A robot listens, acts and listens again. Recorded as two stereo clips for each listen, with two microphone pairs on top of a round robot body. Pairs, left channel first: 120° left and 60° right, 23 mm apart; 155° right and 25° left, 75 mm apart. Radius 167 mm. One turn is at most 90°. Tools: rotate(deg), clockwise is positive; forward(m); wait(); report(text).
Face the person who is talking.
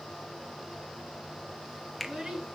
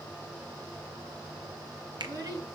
rotate(10)
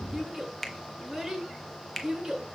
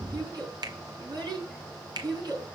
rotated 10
report("Facing the child speaking.")